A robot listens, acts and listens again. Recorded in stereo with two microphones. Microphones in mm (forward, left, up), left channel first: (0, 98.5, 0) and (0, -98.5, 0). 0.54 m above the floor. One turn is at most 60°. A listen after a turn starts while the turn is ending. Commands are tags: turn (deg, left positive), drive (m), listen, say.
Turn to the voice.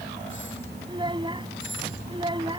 <turn deg="-25"/>
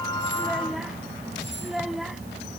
<say>Found it: a child speaking, straight ahead.</say>